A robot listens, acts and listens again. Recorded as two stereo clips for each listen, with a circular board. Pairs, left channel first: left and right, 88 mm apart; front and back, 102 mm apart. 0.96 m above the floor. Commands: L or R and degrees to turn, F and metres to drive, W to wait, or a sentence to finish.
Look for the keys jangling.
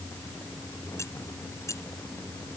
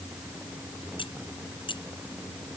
L35
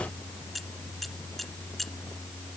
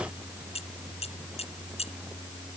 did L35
Facing the keys jangling.